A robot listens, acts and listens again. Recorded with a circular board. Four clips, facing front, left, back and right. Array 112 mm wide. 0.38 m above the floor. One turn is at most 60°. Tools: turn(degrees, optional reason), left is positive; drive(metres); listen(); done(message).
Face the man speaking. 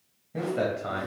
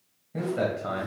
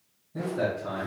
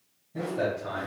turn(degrees=35, reason="The man speaking: 35° left.")
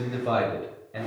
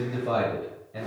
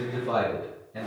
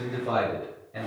turn(degrees=-10, reason="The man speaking is now 10° right.")
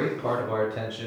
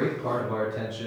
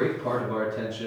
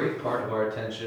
turn(degrees=-20, reason="The man speaking is now 20° right.")
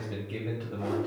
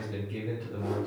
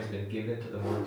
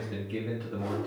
turn(degrees=-15, reason="The man speaking is now 15° right.")
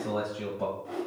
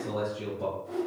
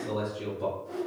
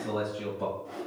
turn(degrees=-15, reason="The man speaking is now 15° right.")
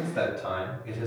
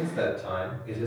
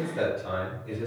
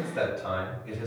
turn(degrees=-15, reason="The man speaking is now 15° right.")
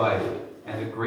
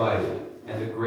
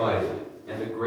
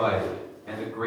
done("Found it: a man speaking, straight ahead.")